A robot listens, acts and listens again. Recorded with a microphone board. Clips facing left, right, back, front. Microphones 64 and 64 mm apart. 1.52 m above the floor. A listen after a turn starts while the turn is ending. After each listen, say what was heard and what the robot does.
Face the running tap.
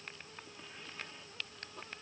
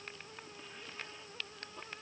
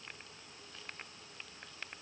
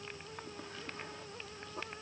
Keep listening.
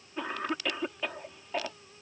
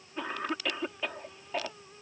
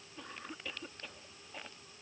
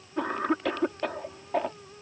Keep listening.
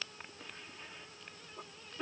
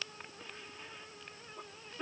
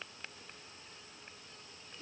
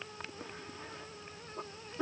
I can't make out a running tap, only a cough.